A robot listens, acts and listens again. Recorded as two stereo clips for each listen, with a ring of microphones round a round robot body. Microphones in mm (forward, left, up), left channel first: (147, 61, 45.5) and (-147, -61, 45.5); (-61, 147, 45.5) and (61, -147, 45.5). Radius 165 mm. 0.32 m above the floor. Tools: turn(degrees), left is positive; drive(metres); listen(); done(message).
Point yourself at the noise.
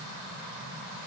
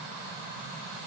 listen()
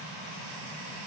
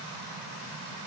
listen()
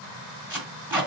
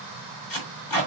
turn(degrees=120)
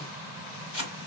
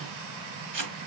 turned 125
turn(degrees=-10)
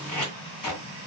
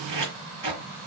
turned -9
done("Facing the tape being pulled, 2 to 4 m away.")